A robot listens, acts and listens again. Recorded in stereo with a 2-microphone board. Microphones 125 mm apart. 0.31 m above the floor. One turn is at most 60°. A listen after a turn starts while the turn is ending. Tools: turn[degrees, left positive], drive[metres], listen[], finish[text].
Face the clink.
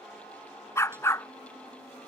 Action: listen[]
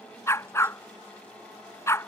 Action: listen[]
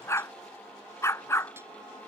Action: finish[I can't make out a clink to turn to.]